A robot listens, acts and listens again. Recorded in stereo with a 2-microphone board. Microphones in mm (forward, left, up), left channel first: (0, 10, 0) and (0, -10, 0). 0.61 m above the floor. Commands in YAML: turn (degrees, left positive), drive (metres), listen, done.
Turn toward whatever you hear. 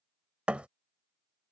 turn: -90
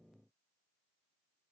done: "Facing where the thud came from. I can't hear it now."